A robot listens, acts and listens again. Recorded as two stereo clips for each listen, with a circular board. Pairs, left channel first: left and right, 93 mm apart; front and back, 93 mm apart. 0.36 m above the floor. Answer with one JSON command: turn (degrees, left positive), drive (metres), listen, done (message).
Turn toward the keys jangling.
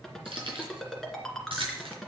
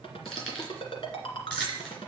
{"turn": -80}
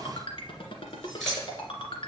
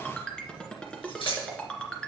{"done": "Found it: keys jangling, straight ahead, over 4 m away."}